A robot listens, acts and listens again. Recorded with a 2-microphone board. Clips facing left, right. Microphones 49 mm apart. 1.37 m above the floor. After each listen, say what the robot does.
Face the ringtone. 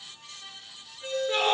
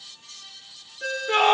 Turn 90° right.
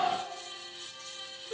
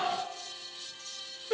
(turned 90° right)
Keep listening.
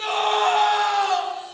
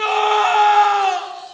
Keep listening.
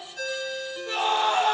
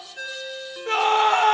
Turn 15° right.
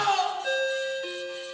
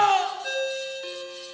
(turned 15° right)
Found it: a ringtone, straight ahead.